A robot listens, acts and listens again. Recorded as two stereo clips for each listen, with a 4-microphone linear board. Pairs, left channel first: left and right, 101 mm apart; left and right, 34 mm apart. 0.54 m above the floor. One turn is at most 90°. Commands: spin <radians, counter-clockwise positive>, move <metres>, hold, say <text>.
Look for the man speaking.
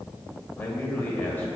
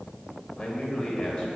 spin 0.35
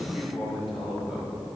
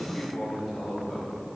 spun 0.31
spin 0.52
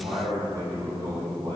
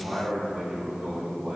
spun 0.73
spin -0.70
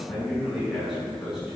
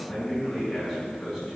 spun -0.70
say Found it: a man speaking, straight ahead.